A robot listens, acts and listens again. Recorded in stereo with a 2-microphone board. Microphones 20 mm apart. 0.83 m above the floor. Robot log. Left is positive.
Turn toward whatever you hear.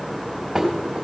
note: The dishes clattering: about 20° right or 160° right.
cmd yaw -20
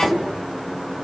cmd idle
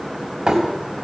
note: So it is at 140° right.
cmd yaw -140
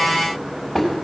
end: Found it: dishes clattering, straight ahead, 2 to 4 m away.